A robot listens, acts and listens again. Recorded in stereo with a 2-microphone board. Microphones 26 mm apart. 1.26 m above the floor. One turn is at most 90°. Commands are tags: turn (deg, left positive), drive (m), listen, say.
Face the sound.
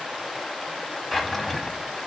<turn deg="30"/>
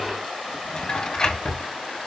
<turn deg="90"/>
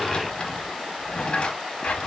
<turn deg="50"/>
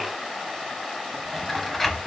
<say>Found it: a drawer, straight ahead, under 1 m away.</say>